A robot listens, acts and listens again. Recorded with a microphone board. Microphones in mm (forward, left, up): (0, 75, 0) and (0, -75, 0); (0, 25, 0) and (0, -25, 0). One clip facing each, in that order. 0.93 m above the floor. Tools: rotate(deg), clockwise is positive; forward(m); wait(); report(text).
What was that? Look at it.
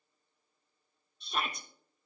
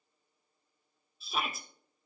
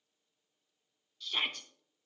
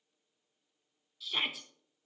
rotate(30)
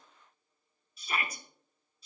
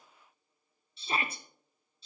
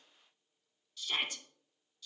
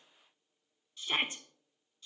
rotate(145)
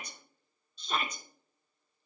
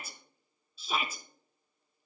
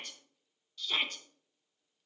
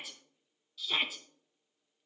report("Facing the shout, under 1 m away.")